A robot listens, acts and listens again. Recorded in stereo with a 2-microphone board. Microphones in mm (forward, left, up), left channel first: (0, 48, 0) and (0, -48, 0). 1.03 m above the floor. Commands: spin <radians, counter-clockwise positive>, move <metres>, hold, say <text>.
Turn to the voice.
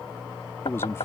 spin 0.44
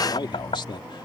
spin 2.27
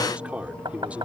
spin -0.26
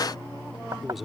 hold
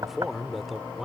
say Facing the man speaking.